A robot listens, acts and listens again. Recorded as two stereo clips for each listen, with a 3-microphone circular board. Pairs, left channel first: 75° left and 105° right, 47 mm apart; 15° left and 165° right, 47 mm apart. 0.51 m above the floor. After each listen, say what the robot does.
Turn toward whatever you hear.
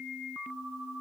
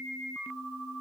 Keep listening.
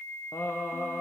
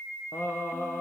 Turn 50° left.
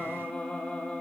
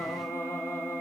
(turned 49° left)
Facing the singing, 2 to 4 m away.